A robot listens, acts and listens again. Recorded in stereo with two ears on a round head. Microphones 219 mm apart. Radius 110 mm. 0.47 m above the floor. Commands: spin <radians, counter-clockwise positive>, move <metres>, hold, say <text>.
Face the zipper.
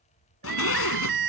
spin 1.05
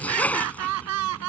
say Found it: a zipper, straight ahead.